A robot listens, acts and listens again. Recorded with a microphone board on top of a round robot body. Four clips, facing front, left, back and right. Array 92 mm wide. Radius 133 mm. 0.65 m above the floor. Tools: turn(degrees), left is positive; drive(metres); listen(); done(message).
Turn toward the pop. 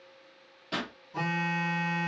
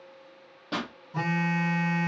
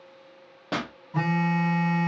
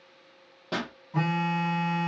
turn(degrees=-175)
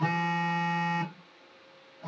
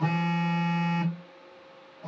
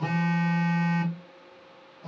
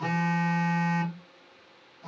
done("Facing where the pop came from. I can't hear it now.")